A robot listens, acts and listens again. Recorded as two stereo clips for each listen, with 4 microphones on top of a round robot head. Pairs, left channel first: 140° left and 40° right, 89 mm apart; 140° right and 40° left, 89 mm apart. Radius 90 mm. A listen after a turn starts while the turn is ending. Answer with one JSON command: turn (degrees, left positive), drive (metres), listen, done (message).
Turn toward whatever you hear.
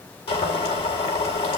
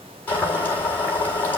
{"turn": 150}
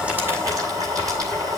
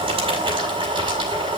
{"turn": 10}
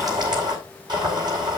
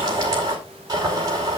{"done": "Facing the boiling."}